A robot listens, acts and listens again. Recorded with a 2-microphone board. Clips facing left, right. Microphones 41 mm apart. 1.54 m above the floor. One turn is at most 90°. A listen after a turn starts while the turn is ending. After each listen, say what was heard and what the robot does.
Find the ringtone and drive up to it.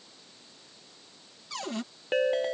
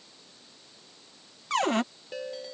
The ringtone: about 55° left or 125° left. Turn 55° left.
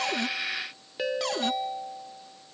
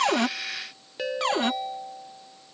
Drive 1.0 m forward.
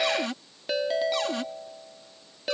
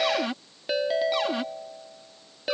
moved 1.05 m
The ringtone is now 10° right. Turn 10° right.
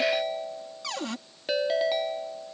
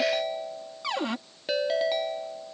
Drive 1.0 m forward.
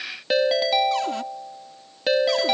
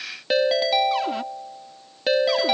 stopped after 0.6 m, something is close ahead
Arrived at the ringtone, straight ahead.